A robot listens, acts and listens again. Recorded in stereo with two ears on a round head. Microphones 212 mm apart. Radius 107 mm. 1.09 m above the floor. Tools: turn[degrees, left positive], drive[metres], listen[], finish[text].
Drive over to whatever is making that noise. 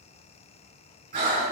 Thought: The breathing: about 40° right or 140° right.
Action: turn[-40]
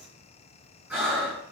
Thought: So it is at 10° right.
Action: turn[-10]
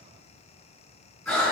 Action: drive[1.0]
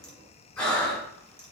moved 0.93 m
Action: drive[1.0]
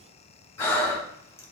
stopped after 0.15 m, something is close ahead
Thought: The breathing is now 15° left.
Action: turn[15]
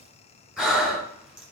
Action: finish[I am next to the breathing.]